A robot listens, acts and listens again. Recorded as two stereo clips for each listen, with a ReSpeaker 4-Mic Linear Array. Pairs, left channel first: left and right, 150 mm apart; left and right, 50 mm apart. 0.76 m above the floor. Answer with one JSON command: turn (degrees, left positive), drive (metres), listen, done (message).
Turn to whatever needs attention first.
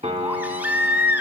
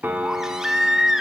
{"turn": -30}
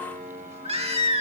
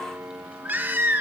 {"turn": -135}
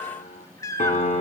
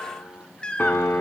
{"turn": 20}
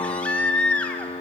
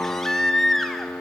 {"turn": 10}
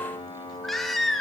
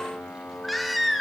{"done": "Found it: a baby crying, straight ahead."}